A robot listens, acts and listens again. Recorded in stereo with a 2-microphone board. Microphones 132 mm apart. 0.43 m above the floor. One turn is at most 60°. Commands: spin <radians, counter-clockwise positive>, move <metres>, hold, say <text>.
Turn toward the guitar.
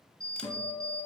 spin 0.79
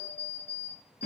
spin 1.05
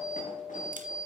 spin 0.87
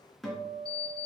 say Found it: a guitar, straight ahead, 2 to 4 m away.